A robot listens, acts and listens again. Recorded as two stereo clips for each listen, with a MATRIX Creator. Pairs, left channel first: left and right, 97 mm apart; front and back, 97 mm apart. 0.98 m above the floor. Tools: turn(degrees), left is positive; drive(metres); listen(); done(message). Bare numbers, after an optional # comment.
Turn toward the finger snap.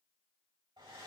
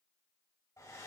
listen()
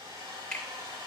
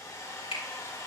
# The finger snap: 10° left.
turn(10)
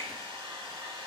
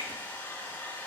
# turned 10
listen()
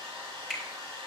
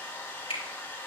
done("Found it: a finger snap, straight ahead.")